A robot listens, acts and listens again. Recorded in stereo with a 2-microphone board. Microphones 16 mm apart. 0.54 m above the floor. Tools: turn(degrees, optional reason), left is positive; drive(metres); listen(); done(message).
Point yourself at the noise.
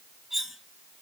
turn(degrees=-15, reason="The cutlery clinking: about 15° right or 165° right.")
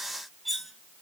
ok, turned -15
done("Facing the cutlery clinking, 1 to 2 m away.")